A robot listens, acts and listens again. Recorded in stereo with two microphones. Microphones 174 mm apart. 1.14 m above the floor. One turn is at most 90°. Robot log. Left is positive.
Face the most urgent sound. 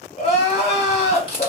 note: The crying: about 35° left or 145° left.
cmd yaw +35
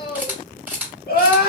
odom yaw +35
note: So it is at 100° left.
cmd yaw +90
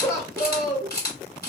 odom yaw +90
note: The crying is now 20° left.
cmd yaw +20
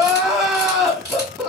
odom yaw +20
end: Facing the crying, under 1 m away.